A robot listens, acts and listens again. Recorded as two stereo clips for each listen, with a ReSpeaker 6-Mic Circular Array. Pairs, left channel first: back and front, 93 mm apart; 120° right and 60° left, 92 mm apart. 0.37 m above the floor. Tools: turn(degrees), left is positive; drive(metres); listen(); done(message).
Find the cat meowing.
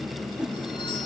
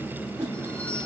listen()
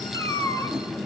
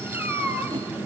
turn(degrees=125)
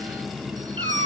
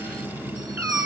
done("Facing the cat meowing.")